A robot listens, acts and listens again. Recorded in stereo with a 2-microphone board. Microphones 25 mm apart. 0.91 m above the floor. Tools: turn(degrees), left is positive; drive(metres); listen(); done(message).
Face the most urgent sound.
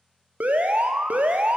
turn(degrees=-90)
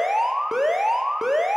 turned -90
turn(degrees=-10)
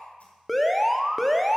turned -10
done("Found it: an alarm, straight ahead, under 1 m away.")